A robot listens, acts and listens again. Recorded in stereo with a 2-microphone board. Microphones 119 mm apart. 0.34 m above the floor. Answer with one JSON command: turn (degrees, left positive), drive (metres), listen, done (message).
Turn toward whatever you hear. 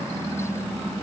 {"listen": true}
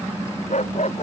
{"turn": 90}
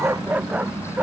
{"turn": -15}
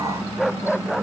{"done": "Facing the dog barking."}